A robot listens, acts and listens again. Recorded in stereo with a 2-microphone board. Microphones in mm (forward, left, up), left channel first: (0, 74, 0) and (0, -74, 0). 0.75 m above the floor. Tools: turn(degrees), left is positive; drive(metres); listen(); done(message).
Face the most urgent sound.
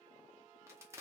listen()
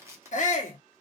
turn(degrees=55)
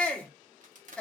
done("Facing the shout, under 1 m away.")